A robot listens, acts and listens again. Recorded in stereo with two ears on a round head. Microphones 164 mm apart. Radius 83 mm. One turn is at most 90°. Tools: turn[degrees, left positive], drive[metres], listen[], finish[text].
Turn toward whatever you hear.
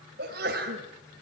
Thought: The sneeze: about 60° right or 120° right.
Action: turn[-60]
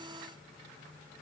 Action: listen[]
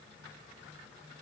Action: finish[I heard a sneeze, but can't make it out now. It was about straight ahead or 60° right.]